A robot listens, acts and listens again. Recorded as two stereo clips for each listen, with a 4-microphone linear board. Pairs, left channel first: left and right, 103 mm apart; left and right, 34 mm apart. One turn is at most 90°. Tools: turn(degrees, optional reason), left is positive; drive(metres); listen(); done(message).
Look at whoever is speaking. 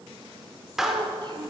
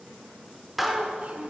turn(degrees=-45, reason="The child speaking: about 45° right or 135° right.")
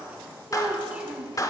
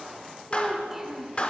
turn(degrees=-15, reason="So it is at 15° right.")
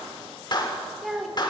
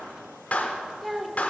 done("Found it: a child speaking, straight ahead, 1 to 2 m away.")